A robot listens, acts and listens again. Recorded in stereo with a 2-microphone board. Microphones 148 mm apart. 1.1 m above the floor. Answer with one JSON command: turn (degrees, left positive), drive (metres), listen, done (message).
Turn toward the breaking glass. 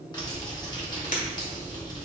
{"turn": 65}
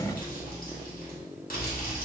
{"listen": true}
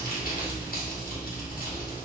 {"done": "I heard breaking glass, but can't make it out now. It was about straight ahead or 50° left."}